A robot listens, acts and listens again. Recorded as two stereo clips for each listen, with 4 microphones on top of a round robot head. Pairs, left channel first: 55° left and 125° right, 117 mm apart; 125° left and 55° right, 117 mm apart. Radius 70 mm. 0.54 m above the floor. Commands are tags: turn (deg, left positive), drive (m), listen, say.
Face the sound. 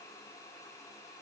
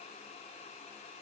<listen/>
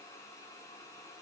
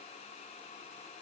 <listen/>
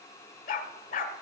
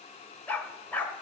<turn deg="50"/>
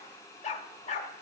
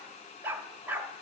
<turn deg="20"/>
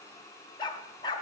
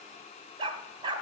<say>Facing the dog barking, under 1 m away.</say>